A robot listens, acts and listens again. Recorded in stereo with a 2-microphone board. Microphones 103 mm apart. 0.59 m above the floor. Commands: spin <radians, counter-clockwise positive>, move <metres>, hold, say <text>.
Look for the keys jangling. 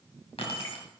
spin 1.22
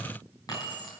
spin 0.70
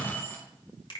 spin 0.35
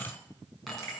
say Facing the keys jangling.